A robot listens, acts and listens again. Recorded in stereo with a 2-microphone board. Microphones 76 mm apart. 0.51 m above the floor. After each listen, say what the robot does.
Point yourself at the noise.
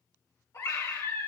Turn 40° left.
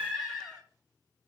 Facing the scream, 2 to 4 m away.